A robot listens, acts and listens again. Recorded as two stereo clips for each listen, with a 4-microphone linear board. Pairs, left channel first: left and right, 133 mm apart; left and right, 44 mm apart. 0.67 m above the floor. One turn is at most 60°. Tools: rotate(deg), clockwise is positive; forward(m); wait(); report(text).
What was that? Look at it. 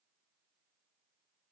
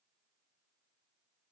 wait()
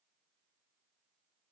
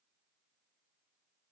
wait()
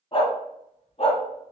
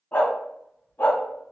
rotate(-50)
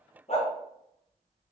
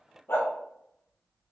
rotate(-55)
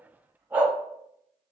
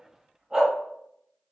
rotate(15)
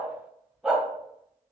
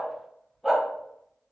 report("Found it: a dog barking, straight ahead.")